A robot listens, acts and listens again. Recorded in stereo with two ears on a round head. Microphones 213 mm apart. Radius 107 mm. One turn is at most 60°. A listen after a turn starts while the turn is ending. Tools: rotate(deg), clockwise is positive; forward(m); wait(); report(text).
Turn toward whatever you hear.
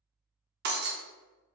rotate(45)
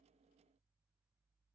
wait()
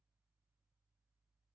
report("I heard breaking glass, but can't make it out now. It was about straight ahead or 90° right.")